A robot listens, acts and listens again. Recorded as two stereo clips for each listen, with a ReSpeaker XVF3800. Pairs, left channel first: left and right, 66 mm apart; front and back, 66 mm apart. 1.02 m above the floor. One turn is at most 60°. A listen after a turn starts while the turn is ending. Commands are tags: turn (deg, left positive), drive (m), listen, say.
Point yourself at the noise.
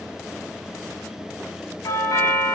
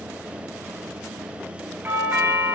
<turn deg="60"/>
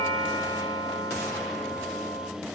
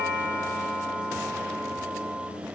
<turn deg="60"/>
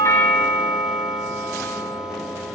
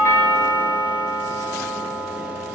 <turn deg="-15"/>
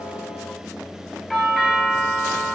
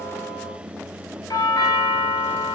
<say>Facing the doorbell.</say>